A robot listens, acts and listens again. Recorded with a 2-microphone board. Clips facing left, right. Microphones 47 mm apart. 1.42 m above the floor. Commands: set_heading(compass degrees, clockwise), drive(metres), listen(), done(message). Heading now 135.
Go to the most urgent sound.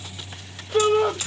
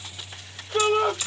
set_heading(105)
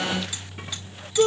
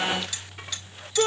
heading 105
set_heading(135)
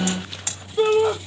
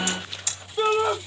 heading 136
drive(1.0)
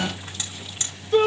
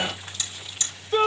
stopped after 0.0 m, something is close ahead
done("Blocked. The shout is further on, straight ahead.")